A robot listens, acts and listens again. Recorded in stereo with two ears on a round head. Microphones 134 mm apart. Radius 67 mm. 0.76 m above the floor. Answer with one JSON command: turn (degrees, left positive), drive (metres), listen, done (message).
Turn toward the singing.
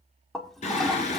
{"turn": 50}
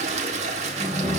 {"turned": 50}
{"done": "Found it: singing, straight ahead, 2 to 4 m away."}